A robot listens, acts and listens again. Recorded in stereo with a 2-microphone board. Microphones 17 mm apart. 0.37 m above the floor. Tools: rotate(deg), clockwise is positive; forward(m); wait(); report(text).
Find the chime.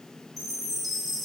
rotate(-30)
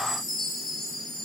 rotate(-140)
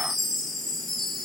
report("Found it: a chime, straight ahead.")